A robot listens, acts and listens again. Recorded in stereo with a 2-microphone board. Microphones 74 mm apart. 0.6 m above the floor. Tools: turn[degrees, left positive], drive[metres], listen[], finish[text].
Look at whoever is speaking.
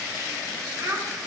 Thought: The child speaking: about 45° right or 135° right.
Action: turn[-45]
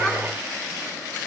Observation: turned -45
Action: listen[]
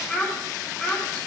Action: finish[Found it: a child speaking, straight ahead.]